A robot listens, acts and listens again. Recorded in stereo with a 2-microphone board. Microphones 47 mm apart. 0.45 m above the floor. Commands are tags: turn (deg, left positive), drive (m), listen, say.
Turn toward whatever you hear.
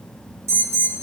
<turn deg="-70"/>
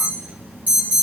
<turn deg="-35"/>
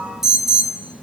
<say>Found it: an alarm, straight ahead, 2 to 4 m away.</say>